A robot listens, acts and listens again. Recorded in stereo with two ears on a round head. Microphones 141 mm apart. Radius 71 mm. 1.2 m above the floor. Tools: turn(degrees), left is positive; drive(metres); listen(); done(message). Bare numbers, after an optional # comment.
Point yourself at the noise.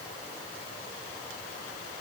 listen()
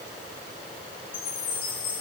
# The chime: about 30° left or 150° left.
turn(30)
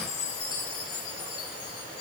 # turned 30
# So it is at 120° left.
turn(120)
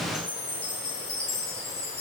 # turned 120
# The chime is now 35° left.
turn(35)
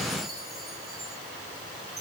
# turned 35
done("Facing the chime.")